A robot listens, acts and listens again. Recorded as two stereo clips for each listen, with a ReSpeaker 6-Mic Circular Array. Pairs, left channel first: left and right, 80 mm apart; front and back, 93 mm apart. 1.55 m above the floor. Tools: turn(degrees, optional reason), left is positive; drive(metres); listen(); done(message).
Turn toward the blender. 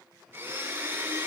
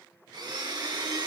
turn(degrees=-150, reason="The blender: 150° right.")
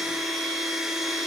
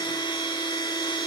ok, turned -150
done("Found it: a blender, straight ahead, 2 to 4 m away.")